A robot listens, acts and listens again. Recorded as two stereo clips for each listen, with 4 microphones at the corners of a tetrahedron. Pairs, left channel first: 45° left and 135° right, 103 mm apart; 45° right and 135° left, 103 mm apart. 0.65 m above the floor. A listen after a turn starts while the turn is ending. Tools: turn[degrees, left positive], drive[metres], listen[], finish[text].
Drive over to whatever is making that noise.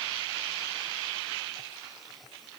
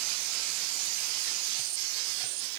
Action: listen[]
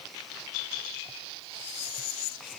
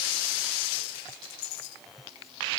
Action: listen[]
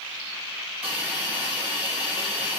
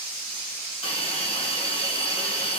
Thought: The hiss: 60° right.
Action: turn[-60]
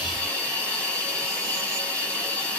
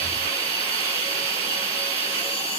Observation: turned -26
Thought: The hiss is now 35° right.
Action: turn[-35]
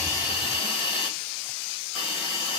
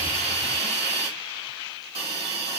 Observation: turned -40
Action: drive[1.0]
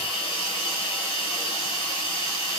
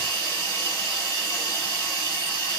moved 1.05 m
Action: drive[1.0]
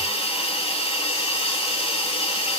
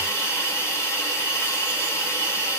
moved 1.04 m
Thought: The hiss is now 20° left.
Action: turn[20]
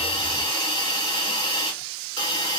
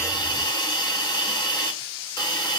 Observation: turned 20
Action: drive[1.0]
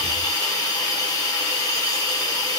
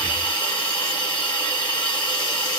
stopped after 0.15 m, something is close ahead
Action: finish[I am next to the hiss.]